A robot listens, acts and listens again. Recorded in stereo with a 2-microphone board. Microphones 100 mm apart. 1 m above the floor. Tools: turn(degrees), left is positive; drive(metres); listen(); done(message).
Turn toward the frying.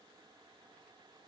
listen()
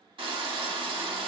turn(degrees=-55)
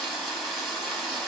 done("Facing the frying.")